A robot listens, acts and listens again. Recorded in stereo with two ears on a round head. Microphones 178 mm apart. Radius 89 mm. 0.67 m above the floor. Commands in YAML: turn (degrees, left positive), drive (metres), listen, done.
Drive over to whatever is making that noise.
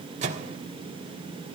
turn: -35
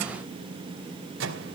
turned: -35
turn: -105
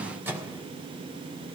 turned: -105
turn: -10
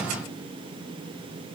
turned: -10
listen: true
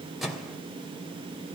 drive: 1.0
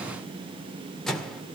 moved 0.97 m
drive: 1.0
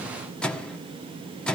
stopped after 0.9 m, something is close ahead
done: "I am next to the microwave."